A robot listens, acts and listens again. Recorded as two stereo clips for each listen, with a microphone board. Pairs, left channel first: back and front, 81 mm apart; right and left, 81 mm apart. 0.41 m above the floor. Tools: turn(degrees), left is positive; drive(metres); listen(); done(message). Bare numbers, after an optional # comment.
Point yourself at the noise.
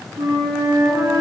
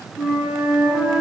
# The flute: 10° left.
turn(10)
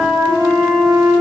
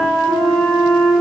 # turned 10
done("Facing the flute.")